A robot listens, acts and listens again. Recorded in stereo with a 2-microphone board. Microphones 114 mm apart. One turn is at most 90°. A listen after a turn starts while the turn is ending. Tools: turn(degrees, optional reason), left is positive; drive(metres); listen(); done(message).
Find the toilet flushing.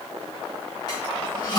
turn(degrees=40, reason="The toilet flushing: about 40° left or 140° left.")
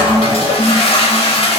turn(degrees=90, reason="So it is at 90° left.")
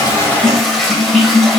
done("Facing the toilet flushing.")